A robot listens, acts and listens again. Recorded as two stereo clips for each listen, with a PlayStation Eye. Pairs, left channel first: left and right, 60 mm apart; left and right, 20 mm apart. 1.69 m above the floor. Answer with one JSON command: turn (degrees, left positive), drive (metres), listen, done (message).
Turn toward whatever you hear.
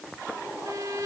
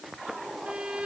{"turn": -70}
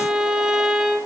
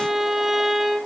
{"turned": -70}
{"turn": -10}
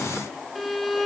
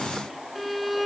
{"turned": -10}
{"done": "Facing the violin, 2 to 4 m away."}